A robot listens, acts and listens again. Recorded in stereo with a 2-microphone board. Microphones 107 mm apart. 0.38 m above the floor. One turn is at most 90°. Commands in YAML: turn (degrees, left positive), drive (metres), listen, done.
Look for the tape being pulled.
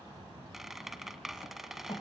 listen: true
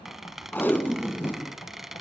turn: 20
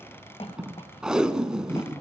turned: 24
done: "Found it: tape being pulled, straight ahead."